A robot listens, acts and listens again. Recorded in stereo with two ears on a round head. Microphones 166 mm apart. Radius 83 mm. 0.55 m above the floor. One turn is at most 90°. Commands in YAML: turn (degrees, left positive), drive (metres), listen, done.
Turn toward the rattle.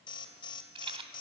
turn: -30
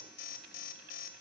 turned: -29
listen: true
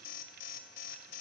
listen: true
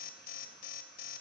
done: "I heard a rattle, but can't make it out now. It was about straight ahead or 120° right."